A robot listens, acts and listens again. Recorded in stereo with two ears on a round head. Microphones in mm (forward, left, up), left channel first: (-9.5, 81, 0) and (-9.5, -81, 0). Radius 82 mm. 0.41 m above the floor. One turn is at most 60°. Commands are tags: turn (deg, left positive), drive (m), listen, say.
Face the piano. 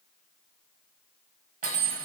<listen/>
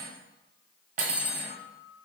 <turn deg="55"/>
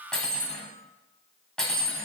<listen/>
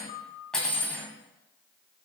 <turn deg="55"/>
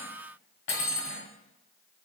<listen/>
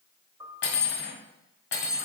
<turn deg="-20"/>
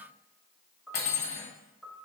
<say>Facing the piano.</say>